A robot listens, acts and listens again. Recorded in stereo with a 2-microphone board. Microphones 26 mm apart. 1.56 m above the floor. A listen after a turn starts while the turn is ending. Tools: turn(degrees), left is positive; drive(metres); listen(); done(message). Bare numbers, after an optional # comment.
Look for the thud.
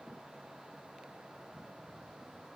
listen()
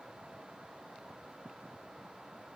listen()
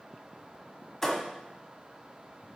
turn(30)
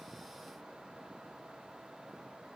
listen()
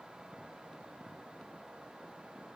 done("I heard a thud, but can't make it out now. It was about 20° right or 140° left.")